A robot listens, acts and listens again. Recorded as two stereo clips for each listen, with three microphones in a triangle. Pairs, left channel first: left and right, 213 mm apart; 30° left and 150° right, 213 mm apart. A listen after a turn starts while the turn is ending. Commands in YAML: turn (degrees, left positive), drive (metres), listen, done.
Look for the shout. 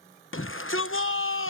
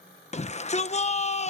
turn: 85
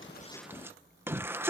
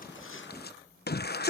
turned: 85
turn: -10
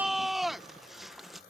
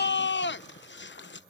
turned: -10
done: "Facing the shout."